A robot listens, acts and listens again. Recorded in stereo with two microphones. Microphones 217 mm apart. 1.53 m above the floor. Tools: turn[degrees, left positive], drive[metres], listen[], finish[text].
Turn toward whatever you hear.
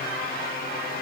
Action: listen[]
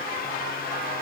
Action: listen[]
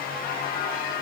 Action: finish[I can't make out anything to turn to.]